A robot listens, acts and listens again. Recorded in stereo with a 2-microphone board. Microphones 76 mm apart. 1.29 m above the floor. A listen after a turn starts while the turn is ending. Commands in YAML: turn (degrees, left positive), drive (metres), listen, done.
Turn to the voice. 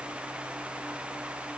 listen: true
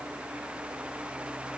listen: true
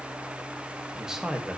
turn: -30
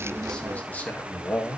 turn: 20
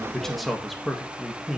done: "Facing the man speaking, 1 to 2 m away."